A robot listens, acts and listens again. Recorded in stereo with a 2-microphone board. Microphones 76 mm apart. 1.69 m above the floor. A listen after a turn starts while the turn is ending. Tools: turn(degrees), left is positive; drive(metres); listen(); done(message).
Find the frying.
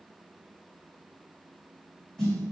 listen()
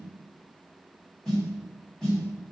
listen()
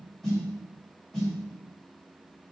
done("I can't make out frying to turn to.")